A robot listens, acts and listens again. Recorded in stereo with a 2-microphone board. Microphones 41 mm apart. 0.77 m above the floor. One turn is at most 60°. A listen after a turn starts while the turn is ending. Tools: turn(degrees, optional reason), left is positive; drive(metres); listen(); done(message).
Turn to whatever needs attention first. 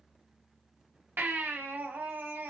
turn(degrees=-55, reason="The baby crying: about 55° right or 125° right.")
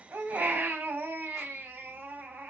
turn(degrees=-60, reason="So it is at 60° right.")
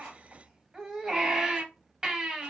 turn(degrees=-20, reason="The baby crying is now 20° right.")
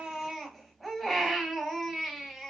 done("Found it: a baby crying, straight ahead, under 1 m away.")